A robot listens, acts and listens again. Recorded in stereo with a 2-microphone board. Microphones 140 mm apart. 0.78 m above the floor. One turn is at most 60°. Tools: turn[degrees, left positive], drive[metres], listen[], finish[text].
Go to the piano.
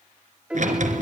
Action: turn[-30]
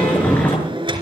Action: listen[]
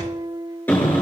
Thought: So it is at 145° right.
Action: turn[-60]
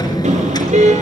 Thought: Nothing new. It was at 85° right.
Action: turn[-60]
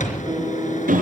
Thought: The piano is now 40° right.
Action: turn[-40]
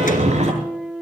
Action: drive[1.0]
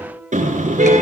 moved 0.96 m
Thought: The piano is now 15° right.
Action: turn[-15]
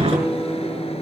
Action: drive[1.0]
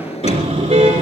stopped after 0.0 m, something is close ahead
Action: listen[]
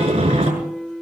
Action: finish[I am next to the piano.]